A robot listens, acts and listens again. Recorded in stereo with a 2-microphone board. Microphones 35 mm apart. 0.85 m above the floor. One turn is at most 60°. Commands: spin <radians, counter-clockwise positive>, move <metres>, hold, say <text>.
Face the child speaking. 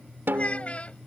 spin 0.70
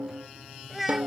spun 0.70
say Facing the child speaking.